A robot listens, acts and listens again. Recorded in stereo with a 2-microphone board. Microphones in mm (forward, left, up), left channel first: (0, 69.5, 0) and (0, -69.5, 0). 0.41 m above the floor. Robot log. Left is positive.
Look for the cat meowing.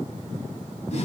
cmd idle
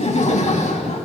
cmd idle
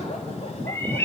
note: The cat meowing: about 15° left or 165° left.
cmd yaw +15
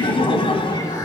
cmd idle
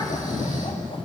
cmd idle
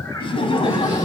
end: I heard a cat meowing, but can't make it out now. It was about straight ahead or 150° left.